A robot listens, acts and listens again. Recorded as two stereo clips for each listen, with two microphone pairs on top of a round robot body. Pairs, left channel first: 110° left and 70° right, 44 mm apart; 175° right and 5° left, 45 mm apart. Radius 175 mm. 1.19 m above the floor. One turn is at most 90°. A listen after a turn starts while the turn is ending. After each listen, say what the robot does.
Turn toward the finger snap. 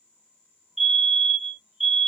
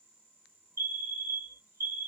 Keep listening.
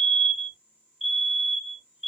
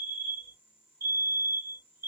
Keep listening.
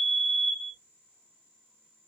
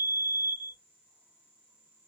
I can't make out a finger snap to turn to.